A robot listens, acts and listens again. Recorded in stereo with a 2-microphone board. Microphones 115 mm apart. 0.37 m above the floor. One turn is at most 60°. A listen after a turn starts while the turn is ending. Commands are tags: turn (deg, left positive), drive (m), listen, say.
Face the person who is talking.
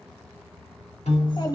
<turn deg="40"/>
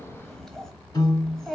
<say>Facing the child speaking.</say>